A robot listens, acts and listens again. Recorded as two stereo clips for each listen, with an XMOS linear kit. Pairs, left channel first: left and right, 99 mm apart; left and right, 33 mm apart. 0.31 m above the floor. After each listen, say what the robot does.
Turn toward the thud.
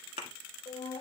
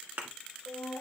Turn 90° right.
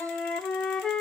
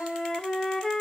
I heard a thud from this way, but can't make it out now.